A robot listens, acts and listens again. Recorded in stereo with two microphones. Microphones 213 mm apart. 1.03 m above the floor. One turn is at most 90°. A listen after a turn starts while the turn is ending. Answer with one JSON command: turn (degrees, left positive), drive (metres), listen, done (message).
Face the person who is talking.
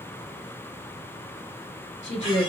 {"turn": 60}
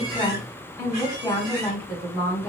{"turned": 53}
{"turn": 10}
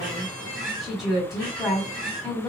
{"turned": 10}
{"done": "Facing the woman speaking."}